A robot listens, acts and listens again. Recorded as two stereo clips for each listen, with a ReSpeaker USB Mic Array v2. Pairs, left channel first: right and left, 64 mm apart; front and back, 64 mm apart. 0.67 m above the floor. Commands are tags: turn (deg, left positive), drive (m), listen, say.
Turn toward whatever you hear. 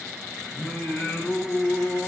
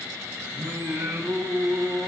<turn deg="-150"/>
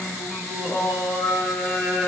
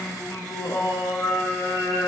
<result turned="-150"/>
<say>Found it: singing, straight ahead, 2 to 4 m away.</say>